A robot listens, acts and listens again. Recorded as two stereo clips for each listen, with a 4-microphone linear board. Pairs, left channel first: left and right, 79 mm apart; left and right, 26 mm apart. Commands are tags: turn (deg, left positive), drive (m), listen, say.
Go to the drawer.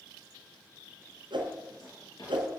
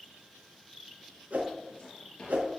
<turn deg="55"/>
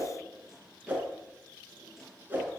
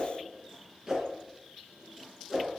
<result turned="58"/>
<listen/>
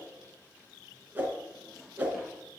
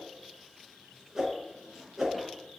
<drive m="1.0"/>
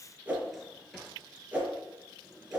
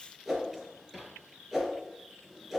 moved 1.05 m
<drive m="1.0"/>
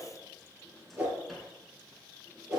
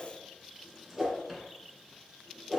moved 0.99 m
<drive m="1.0"/>
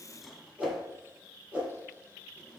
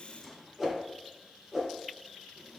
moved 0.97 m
<drive m="1.0"/>
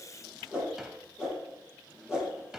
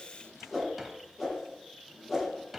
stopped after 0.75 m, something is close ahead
<turn deg="-10"/>
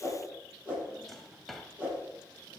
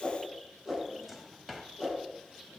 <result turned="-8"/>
<say>I am next to the drawer.</say>